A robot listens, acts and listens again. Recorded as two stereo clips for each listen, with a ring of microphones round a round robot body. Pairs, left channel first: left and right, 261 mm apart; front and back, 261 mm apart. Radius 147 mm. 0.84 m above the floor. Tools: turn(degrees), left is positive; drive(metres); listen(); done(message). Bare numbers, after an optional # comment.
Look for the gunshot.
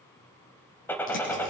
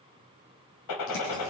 done("Facing the gunshot.")